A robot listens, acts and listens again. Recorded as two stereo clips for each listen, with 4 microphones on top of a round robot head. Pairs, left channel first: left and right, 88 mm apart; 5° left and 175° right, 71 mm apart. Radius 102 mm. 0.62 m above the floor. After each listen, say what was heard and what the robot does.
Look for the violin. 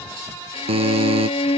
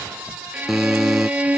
The violin: 110° left. Turn 110° left.
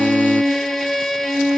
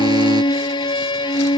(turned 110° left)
Found it: a violin, straight ahead.